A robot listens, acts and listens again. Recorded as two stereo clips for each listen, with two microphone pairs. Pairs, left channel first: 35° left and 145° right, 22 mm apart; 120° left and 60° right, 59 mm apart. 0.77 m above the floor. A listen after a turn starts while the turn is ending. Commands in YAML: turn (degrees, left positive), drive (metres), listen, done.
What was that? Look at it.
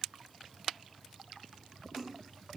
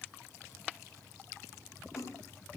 turn: 150
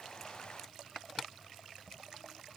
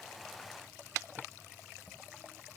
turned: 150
done: "I heard a splash from this way, but can't make it out now."